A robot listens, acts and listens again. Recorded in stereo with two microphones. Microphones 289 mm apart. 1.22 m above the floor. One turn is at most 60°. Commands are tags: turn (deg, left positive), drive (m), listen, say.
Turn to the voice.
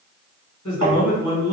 <turn deg="60"/>
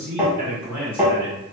<turn deg="20"/>
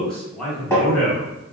<say>Found it: a man speaking, straight ahead, 1 to 2 m away.</say>